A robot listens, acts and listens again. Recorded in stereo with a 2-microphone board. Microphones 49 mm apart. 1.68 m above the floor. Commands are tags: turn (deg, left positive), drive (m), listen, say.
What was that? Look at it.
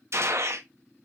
<turn deg="-65"/>
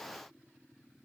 <listen/>
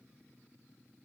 <say>I heard a gunshot, but can't make it out now. It was about straight ahead or 50° right.</say>